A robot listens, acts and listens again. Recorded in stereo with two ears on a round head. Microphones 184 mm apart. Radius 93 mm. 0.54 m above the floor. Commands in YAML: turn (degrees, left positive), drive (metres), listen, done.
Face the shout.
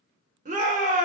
turn: -35
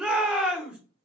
done: "Found it: a shout, straight ahead, 1 to 2 m away."